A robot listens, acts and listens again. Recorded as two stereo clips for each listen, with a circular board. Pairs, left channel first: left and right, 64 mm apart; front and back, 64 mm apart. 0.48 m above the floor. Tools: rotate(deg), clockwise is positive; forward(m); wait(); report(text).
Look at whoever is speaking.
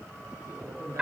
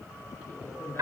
rotate(50)
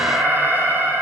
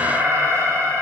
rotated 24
rotate(25)
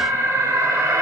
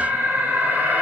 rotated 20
wait()
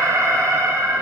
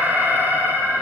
report("Facing where the man speaking came from. I can't hear it now.")